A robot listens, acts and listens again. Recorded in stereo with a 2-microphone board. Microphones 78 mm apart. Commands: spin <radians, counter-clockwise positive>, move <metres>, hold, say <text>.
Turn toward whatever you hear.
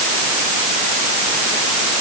hold
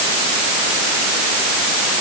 hold
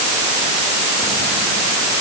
say I can't make out anything to turn to.